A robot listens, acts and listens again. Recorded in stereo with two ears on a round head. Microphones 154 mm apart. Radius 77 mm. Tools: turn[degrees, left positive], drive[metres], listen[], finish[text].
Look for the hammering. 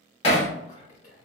Thought: The hammering: about 35° left or 145° left.
Action: turn[35]
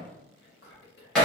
Action: finish[Found it: hammering, straight ahead, 1 to 2 m away.]